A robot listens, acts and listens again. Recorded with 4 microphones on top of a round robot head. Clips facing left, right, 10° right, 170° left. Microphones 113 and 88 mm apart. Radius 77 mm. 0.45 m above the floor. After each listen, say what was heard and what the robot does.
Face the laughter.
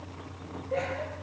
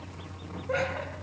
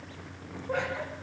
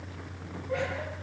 The laughter: 65° right. Turn 65° right.
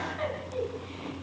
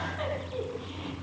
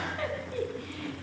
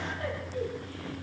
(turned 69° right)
Facing the laughter.